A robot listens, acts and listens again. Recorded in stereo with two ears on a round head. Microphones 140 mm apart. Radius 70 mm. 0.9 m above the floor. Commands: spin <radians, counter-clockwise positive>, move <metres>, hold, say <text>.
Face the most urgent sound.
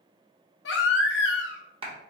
spin 1.57
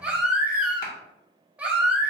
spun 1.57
spin -0.17
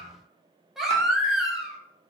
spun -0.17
say Found it: a baby crying, straight ahead, under 1 m away.